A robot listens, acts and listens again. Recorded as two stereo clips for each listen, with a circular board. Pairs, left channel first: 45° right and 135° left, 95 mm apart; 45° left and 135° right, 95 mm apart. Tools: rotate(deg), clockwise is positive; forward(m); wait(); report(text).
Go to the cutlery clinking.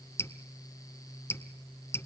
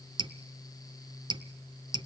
wait()
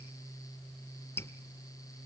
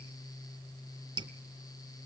wait()
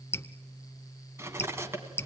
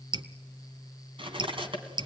rotate(160)
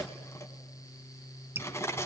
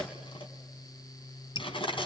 rotate(-20)
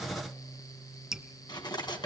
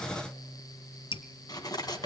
forward(1.0)
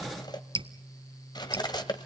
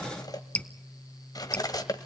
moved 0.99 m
forward(1.0)
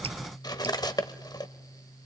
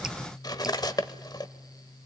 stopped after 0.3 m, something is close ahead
report("Arrived at the cutlery clinking, straight ahead.")